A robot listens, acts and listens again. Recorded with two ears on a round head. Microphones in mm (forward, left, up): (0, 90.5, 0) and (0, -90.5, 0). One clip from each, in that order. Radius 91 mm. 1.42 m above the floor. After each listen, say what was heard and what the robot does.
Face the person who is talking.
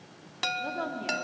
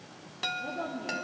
The woman speaking: about 50° left or 130° left. Turn 50° left.
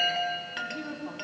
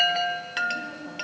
So it is at 85° left. Turn 85° left.
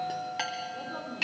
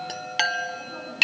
The woman speaking is now 10° left. Turn 10° left.
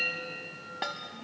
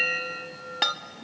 Keep listening.
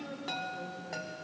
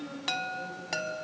Found it: a woman speaking, straight ahead.